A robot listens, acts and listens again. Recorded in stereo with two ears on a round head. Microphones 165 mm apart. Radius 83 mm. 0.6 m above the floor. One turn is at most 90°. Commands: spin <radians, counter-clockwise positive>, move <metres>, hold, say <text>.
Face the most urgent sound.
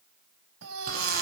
spin -1.57
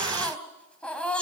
say Facing the baby crying.